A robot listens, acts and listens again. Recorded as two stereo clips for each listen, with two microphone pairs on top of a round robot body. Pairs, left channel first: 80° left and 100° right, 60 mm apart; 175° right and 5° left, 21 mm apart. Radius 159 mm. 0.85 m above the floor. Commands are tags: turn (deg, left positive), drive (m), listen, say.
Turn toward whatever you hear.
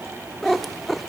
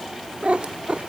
<say>Facing the cat meowing, 1 to 2 m away.</say>